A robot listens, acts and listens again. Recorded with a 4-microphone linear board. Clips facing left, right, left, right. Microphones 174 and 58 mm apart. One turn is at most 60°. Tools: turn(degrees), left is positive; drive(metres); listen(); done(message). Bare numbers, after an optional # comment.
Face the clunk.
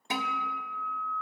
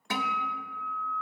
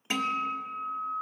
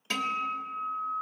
listen()
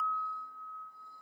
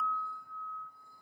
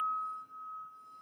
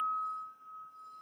listen()
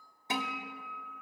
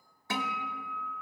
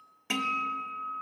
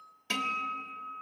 done("I can't make out a clunk, only a guitar.")